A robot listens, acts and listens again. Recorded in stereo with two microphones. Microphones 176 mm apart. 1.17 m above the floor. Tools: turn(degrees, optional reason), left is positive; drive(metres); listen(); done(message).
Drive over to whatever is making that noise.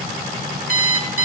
turn(degrees=-55, reason="The alarm clock: about 55° right or 125° right.")
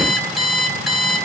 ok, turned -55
drive(metres=1.0)
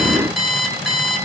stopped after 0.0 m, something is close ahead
done("Blocked. The alarm clock is further on, straight ahead.")